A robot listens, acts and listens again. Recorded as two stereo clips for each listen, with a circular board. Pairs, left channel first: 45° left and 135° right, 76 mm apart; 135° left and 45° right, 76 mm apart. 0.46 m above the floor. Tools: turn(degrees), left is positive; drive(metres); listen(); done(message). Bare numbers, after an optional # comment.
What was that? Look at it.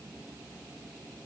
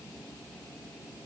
listen()
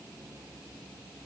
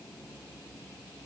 listen()
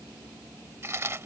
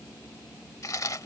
# The chewing: 175° left.
turn(175)
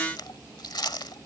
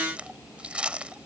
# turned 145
# The chewing is now 30° left.
turn(30)
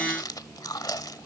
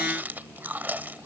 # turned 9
# The chewing is now 20° left.
turn(20)
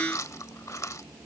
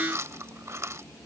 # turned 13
done("Facing the chewing.")